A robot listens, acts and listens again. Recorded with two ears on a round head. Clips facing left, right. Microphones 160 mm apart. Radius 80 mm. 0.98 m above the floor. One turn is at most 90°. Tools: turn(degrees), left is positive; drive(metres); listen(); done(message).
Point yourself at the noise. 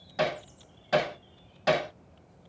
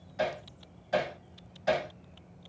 turn(degrees=90)
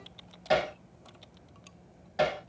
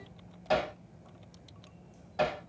turn(degrees=15)
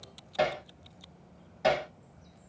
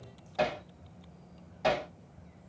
done("Facing the hammering.")